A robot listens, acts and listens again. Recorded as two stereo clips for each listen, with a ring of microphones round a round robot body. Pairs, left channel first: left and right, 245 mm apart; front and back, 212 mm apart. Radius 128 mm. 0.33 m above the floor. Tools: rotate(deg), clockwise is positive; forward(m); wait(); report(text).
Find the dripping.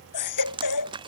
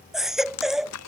rotate(20)
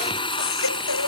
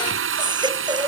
wait()
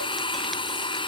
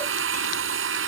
wait()
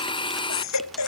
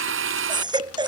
report("Facing where the dripping came from. I can't hear it now.")